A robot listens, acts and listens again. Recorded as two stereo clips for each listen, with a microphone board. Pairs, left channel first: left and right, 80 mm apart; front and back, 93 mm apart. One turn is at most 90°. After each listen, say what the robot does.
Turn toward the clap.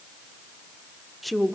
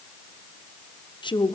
Keep listening.
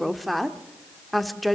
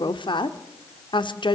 Keep listening.
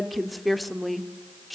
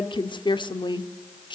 I can't make out a clap, only a woman speaking.